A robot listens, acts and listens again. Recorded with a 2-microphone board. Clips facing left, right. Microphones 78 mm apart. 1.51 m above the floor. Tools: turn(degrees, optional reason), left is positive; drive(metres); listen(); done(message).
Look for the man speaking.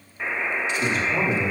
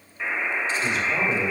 turn(degrees=65, reason="The man speaking: about 65° left or 115° left.")
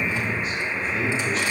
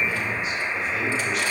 turn(degrees=35, reason="So it is at 35° left.")
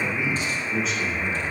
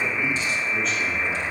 done("Facing the man speaking, 2 to 4 m away.")